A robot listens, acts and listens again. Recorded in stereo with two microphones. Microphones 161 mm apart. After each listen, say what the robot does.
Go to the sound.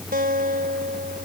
Turn 70° right.
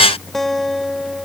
Drive 1.0 m forward.
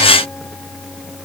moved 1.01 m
Keep listening.
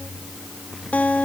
Turn 10° left.
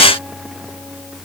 Keep listening.
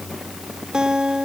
Drive 1.0 m forward.
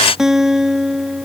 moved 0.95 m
Drive 1.0 m forward.
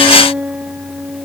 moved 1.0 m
Turn 10° right.
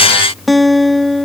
Drive 1.0 m forward.
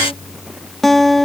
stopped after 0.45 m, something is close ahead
Arrived at the guitar, straight ahead.